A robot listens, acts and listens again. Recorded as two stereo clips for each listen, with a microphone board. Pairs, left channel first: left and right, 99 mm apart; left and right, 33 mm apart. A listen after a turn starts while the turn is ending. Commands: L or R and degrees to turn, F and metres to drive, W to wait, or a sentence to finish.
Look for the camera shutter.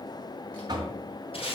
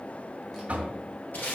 W
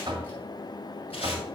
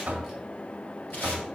W
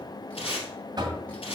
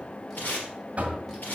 I can't make out a camera shutter to turn to.